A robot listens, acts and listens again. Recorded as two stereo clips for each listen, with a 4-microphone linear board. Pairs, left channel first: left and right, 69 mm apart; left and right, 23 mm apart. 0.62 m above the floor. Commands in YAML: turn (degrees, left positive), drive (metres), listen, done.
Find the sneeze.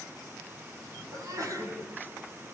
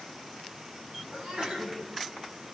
turn: -50
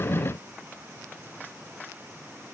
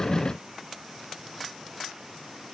listen: true
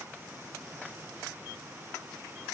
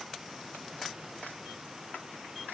done: "I heard a sneeze, but can't make it out now. It was about straight ahead or 80° right."